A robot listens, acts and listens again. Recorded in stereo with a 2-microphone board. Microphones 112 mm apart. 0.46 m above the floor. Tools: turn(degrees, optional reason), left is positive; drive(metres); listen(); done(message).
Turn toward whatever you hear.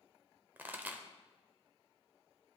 turn(degrees=-15, reason="The pop: about 15° right or 165° right.")
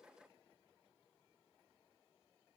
listen()
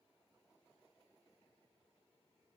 done("I heard a pop, but can't make it out now. It was about straight ahead or 150° right.")